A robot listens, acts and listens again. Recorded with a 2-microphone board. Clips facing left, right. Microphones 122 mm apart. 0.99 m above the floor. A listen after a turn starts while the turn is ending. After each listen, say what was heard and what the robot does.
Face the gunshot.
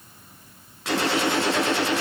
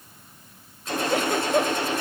Turn 90° left.
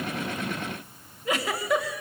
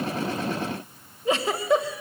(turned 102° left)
Nothing new. It was at 10° right. Turn 10° right.
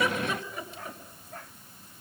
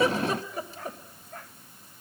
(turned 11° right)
I heard a gunshot from this way, but can't make it out now.